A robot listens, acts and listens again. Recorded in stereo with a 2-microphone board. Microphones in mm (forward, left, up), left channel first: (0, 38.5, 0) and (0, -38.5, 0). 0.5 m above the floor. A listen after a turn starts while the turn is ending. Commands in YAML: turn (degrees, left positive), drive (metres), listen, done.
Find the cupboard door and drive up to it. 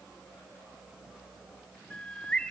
listen: true
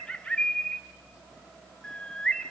listen: true
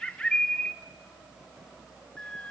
done: "I can't make out a cupboard door to turn to."